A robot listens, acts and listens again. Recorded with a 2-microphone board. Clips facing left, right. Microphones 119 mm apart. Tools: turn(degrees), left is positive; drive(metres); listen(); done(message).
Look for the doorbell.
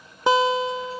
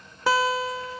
listen()
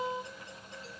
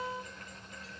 listen()
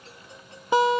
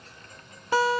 done("I can't make out a doorbell, only a guitar.")